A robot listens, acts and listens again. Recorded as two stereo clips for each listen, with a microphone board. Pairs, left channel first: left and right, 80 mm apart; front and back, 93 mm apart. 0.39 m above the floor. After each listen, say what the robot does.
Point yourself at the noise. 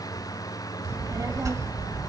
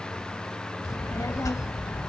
Turn 50° right.
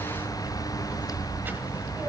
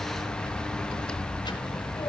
Turn 25° right.
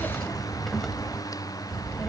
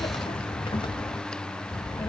Found it: a child speaking, straight ahead, 1 to 2 m away.